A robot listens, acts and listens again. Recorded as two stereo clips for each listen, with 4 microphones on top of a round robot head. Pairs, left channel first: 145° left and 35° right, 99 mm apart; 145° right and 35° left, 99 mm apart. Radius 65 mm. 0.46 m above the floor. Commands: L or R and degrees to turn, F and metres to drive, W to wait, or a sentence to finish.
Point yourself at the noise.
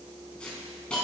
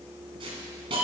L65
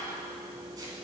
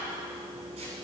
L20
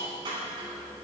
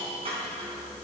Found it: a hiss, straight ahead, over 4 m away.